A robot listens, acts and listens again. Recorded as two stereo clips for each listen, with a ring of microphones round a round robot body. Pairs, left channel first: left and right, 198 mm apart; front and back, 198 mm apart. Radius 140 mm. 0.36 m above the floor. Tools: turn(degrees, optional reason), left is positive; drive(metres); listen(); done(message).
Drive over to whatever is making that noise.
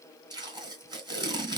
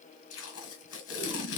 turn(degrees=-20, reason="The tape being pulled: 20° right.")
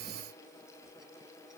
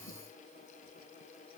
listen()
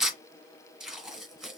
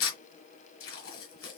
drive(metres=1.0)
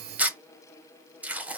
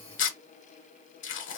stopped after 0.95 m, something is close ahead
turn(degrees=-10, reason="The tape being pulled is now 10° right.")
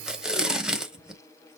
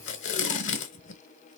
done("I am next to the tape being pulled.")